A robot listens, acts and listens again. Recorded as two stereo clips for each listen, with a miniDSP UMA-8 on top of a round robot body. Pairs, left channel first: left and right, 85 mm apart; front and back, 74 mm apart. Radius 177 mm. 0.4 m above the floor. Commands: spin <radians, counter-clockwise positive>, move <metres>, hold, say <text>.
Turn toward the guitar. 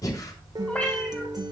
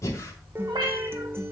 spin -2.18
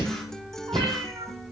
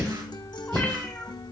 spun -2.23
say Found it: a guitar, straight ahead.